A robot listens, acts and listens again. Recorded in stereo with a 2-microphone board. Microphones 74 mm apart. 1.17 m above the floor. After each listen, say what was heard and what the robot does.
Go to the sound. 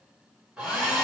Turn 30° right.
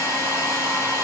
So it is at 145° right. Turn 145° right.
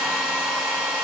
The hair dryer is now 15° right. Turn 15° right.
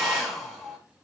The hair dryer is now 10° right. Turn 10° right.
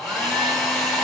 Drive 1.0 m forward.
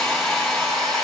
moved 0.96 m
Drive 1.0 m forward.
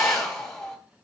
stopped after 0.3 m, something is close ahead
Arrived at the hair dryer, straight ahead.